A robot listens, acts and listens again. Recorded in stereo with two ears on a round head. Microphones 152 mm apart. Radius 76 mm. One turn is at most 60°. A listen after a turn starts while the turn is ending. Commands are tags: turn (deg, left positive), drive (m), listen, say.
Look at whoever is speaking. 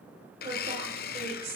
<turn deg="-35"/>
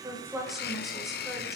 <listen/>
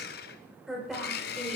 <say>Found it: a woman speaking, straight ahead, over 4 m away.</say>